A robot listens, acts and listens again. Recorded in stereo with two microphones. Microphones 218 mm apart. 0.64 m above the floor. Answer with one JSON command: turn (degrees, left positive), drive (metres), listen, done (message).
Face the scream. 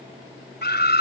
{"turn": 50}
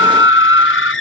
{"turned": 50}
{"turn": 80}
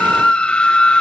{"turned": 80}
{"done": "Found it: a scream, straight ahead."}